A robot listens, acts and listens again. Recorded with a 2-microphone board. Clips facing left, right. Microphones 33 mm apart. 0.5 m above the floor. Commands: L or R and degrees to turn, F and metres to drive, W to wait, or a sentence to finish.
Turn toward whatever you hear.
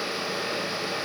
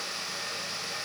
W
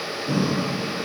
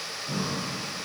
L90
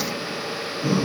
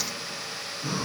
Found it: breathing, straight ahead, 2 to 4 m away.